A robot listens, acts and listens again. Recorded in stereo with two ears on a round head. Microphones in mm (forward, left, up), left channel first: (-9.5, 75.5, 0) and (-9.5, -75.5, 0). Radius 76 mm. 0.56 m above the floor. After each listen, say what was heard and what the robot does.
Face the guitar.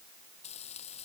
Keep listening.
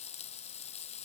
Keep listening.
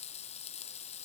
I can't make out a guitar to turn to.